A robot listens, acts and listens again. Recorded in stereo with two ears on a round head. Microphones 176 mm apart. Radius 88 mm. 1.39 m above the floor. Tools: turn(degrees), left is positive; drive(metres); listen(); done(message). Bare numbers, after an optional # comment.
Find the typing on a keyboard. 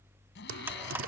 # The typing on a keyboard: about 75° right or 105° right.
turn(-75)
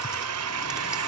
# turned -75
listen()
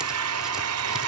listen()
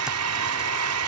done("I heard typing on a keyboard, but can't make it out now. It was about straight ahead or 30° right.")